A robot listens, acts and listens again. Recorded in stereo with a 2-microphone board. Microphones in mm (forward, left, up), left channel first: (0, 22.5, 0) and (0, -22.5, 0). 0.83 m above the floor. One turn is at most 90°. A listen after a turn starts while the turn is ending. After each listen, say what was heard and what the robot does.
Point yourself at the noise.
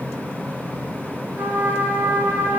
The trumpet: about 55° right or 125° right. Turn 55° right.
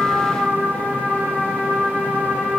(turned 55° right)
So it is at 65° right. Turn 65° right.
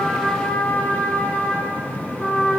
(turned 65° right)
The trumpet is now 15° left. Turn 15° left.
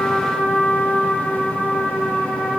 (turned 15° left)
Facing the trumpet, 1 to 2 m away.